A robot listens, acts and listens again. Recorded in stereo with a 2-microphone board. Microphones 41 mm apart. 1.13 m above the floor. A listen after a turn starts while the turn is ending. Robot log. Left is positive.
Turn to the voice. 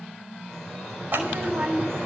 note: The child speaking: about 40° right or 140° right.
cmd yaw -40
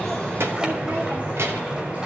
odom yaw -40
note: So it is at 90° right.
cmd yaw -90
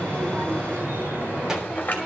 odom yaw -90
cmd idle
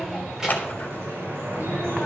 note: The child speaking is now 10° right.
cmd yaw -10
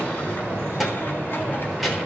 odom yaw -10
end: Found it: a child speaking, straight ahead, 2 to 4 m away.